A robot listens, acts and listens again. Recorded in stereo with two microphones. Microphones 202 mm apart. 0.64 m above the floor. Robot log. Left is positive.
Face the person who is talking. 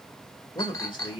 note: The man speaking: about 25° left or 155° left.
cmd yaw +25
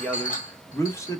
note: The man speaking: about 15° left or 165° left.
cmd yaw +15
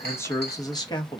note: The man speaking: about 25° left or 155° left.
cmd yaw +25
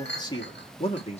note: The man speaking: about 35° left or 145° left.
cmd yaw +35
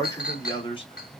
note: The man speaking: about 25° left or 155° left.
cmd yaw +25
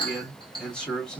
end: Facing the man speaking, 1 to 2 m away.